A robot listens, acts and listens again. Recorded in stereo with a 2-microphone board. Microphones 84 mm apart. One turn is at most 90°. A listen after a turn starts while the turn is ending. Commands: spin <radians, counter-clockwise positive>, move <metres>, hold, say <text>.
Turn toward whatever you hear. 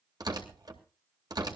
spin -0.87
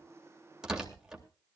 say Facing the tearing paper, 2 to 4 m away.